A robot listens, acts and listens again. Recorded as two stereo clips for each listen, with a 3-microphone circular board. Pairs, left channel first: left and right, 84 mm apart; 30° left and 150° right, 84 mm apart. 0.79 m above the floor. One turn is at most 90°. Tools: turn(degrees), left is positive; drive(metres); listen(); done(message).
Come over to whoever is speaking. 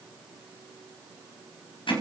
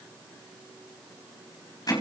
listen()
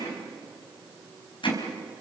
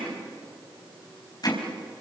listen()
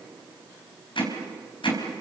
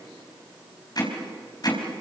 done("I can't make out anyone speaking to turn to.")